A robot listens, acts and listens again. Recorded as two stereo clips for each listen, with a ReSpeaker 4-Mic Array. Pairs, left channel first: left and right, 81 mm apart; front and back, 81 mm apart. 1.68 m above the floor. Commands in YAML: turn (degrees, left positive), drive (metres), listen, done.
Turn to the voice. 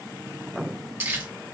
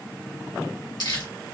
listen: true
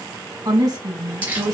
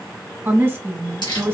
turn: -125
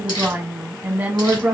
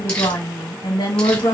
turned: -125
turn: -25
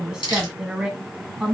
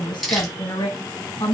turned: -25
turn: -10
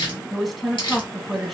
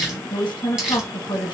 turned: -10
done: "Facing the woman speaking, 1 to 2 m away."